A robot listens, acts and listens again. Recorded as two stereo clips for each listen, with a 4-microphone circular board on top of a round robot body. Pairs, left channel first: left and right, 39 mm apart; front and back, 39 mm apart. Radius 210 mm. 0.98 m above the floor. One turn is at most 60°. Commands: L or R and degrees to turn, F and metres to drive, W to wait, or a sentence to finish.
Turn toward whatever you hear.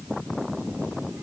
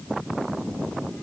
W
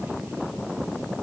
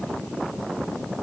W
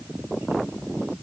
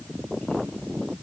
I can't make out anything to turn to.